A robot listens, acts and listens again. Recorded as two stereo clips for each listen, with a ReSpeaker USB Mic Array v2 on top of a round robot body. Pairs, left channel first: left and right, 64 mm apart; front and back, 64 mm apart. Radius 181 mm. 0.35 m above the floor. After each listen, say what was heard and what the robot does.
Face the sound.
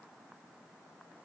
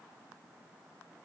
Keep listening.
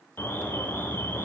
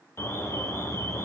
The alarm: 40° left. Turn 40° left.
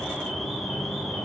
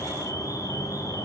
Facing the alarm.